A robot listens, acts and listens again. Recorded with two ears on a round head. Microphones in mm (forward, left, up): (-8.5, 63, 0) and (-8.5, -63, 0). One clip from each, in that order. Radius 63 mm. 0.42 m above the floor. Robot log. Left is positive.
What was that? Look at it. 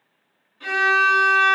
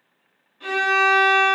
note: The violin: about 15° left or 165° left.
cmd yaw +15
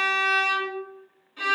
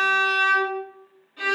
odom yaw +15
note: So it is at 150° left.
cmd yaw +150
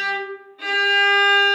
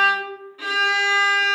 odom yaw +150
note: The violin is now 35° right.
cmd yaw -35
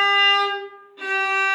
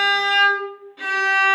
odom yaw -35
note: The violin is now 10° right.
cmd yaw -10
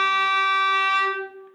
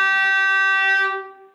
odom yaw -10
end: Facing the violin, 1 to 2 m away.